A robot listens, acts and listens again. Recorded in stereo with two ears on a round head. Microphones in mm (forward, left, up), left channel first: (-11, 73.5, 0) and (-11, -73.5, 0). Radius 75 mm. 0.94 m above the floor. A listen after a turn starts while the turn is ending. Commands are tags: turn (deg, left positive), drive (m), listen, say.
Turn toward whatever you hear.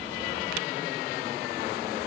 <listen/>
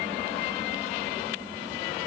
<listen/>
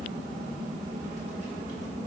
<say>I can't make out anything.</say>